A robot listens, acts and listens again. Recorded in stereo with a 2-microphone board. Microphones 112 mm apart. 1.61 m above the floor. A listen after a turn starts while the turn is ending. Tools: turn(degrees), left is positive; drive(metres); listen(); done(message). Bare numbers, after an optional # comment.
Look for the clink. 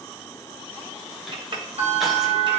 # The clink: about 45° right or 135° right.
turn(-45)
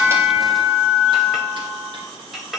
done("Found it: a clink, straight ahead, 1 to 2 m away.")